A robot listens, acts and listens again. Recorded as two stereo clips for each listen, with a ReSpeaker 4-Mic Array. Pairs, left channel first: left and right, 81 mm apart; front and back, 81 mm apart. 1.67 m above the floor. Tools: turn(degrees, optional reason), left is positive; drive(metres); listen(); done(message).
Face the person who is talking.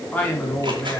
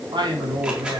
turn(degrees=160, reason="The man speaking: 160° left.")
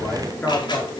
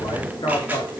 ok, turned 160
turn(degrees=15, reason="The man speaking is now 15° left.")
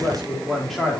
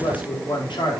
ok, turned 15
done("Facing the man speaking, over 4 m away.")